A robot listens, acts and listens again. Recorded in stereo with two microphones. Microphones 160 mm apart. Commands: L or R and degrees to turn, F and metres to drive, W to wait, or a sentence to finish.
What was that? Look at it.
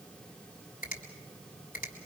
L60
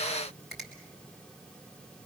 Facing the finger snap.